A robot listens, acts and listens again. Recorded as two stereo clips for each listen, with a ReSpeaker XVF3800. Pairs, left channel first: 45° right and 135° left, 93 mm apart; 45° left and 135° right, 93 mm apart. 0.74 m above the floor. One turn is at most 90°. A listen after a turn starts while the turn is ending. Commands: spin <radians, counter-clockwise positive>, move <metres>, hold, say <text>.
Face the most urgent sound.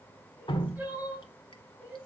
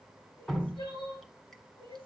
spin 1.05
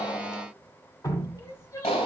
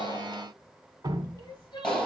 say Found it: crying, straight ahead, over 4 m away.